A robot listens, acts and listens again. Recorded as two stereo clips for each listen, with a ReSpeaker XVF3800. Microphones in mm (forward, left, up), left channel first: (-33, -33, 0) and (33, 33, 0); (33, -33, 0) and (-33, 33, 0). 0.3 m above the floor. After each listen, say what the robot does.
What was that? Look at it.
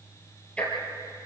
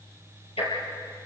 Turn 60° right.
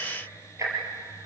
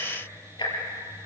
Turn 10° right.
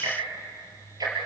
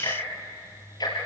Found it: ticking, straight ahead, over 4 m away.